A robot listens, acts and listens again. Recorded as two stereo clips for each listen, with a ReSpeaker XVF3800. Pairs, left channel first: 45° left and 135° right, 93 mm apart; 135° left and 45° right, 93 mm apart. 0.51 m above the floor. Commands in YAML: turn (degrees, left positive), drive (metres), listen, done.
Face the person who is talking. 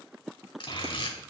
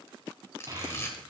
turn: 10
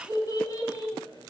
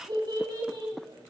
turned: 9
done: "Facing the child speaking."